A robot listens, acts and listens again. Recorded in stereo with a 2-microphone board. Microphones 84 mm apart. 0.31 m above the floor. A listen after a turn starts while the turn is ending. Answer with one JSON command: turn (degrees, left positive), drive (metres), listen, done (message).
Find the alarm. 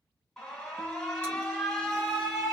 {"turn": 30}
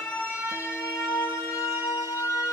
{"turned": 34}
{"turn": 135}
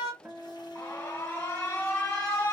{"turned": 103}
{"turn": 30}
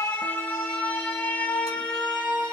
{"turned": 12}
{"turn": 20}
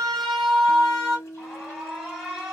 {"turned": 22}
{"done": "Facing the alarm, 1 to 2 m away."}